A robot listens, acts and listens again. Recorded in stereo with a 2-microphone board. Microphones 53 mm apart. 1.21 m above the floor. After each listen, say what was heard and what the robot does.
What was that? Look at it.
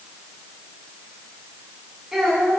Turn 30° right.
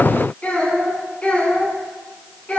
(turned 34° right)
So it is at 25° left. Turn 25° left.
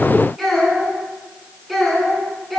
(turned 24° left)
Facing the child speaking.